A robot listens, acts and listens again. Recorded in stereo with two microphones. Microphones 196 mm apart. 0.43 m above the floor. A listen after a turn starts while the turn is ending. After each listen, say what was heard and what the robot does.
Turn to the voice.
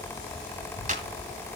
Turn 90° right.
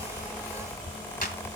Keep listening.
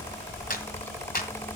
The child speaking is now 10° left. Turn 10° left.
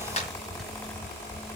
Keep listening.
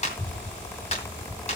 The child speaking is now 10° left. Turn 10° left.
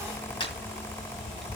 Found it: a child speaking, straight ahead, 1 to 2 m away.